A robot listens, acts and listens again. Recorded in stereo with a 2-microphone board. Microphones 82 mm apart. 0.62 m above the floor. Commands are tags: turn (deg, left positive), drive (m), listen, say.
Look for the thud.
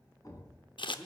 <turn deg="45"/>
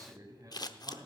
<listen/>
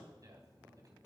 <say>I heard a thud, but can't make it out now. It was about straight ahead or 90° left.</say>